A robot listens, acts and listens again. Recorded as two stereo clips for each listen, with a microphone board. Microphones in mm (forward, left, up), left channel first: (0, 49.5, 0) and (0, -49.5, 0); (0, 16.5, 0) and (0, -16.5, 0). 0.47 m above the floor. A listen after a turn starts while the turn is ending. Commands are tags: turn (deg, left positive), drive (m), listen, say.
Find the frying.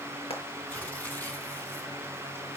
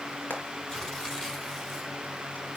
<turn deg="90"/>
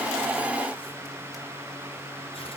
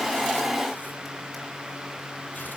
<listen/>
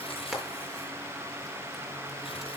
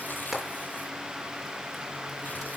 <listen/>
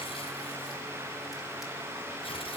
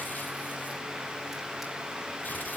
<say>I heard frying from this way, but can't make it out now.</say>